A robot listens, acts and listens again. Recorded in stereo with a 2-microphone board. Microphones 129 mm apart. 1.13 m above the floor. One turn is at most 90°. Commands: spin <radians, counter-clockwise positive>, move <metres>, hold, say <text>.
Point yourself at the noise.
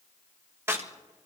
spin -0.35
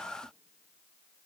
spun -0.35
hold
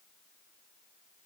say I heard a crack, but can't make it out now. It was about straight ahead or 140° right.